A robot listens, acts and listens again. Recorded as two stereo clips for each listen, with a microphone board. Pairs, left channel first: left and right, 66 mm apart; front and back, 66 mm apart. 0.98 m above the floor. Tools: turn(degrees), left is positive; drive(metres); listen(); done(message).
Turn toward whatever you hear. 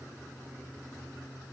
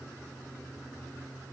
listen()
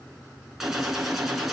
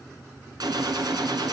turn(degrees=-175)
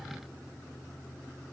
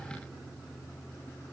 done("Facing where the gunshot came from. I can't hear it now.")